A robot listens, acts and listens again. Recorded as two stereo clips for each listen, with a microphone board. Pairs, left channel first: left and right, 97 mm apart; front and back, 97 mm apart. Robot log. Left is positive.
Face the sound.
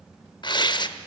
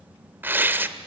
note: The tearing paper: 115° left.
cmd yaw +115
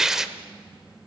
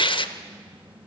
end: Found it: tearing paper, straight ahead, under 1 m away.